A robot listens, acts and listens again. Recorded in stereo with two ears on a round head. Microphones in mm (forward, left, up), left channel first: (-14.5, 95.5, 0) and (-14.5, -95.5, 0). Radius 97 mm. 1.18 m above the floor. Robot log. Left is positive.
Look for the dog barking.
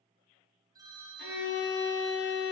cmd idle
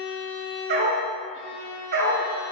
note: The dog barking: about 45° right or 135° right.
cmd yaw -45
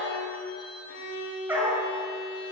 note: So it is at 10° right.
cmd yaw -10
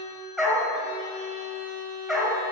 end: Found it: a dog barking, straight ahead.